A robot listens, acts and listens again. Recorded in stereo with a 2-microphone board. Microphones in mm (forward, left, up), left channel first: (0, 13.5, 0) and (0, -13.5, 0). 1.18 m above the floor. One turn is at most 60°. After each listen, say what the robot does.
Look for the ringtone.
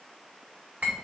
Keep listening.
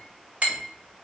Keep listening.
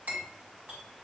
I can't make out a ringtone to turn to.